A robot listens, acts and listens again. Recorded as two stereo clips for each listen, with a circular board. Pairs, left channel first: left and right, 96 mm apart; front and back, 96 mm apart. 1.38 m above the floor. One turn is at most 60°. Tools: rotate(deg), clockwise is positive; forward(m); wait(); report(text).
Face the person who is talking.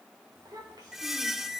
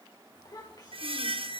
rotate(45)
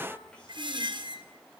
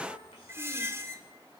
rotate(-10)
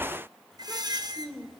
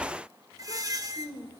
report("Facing the child speaking.")